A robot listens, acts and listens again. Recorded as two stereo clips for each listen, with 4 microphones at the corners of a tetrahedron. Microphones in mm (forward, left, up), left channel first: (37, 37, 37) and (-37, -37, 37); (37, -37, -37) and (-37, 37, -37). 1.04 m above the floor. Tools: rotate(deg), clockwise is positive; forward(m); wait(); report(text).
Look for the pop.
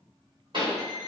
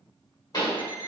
rotate(95)
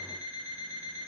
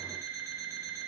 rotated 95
report("I heard a pop from this way, but can't make it out now.")